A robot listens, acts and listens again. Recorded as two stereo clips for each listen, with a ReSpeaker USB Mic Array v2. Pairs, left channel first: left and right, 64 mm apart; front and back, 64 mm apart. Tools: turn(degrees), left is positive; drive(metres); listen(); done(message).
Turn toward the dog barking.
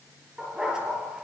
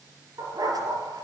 turn(degrees=-170)
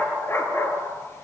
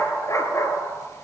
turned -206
turn(degrees=40)
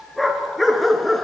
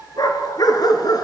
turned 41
done("Facing the dog barking, 2 to 4 m away.")